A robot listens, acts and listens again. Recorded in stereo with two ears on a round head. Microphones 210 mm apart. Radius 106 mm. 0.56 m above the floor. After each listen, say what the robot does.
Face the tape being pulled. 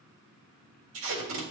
Turn 65° right.
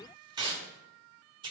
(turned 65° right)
Turn 25° right.
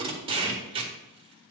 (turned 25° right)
Turn 25° right.
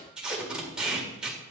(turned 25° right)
Found it: tape being pulled, straight ahead, 1 to 2 m away.